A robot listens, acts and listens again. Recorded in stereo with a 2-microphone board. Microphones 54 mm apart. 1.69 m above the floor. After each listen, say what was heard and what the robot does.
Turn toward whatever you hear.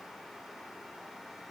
Keep listening.
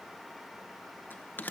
The bell: about 40° left or 140° left. Turn 40° left.
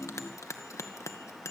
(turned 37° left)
So it is at 105° left. Turn 105° left.
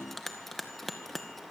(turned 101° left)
Facing the bell, 2 to 4 m away.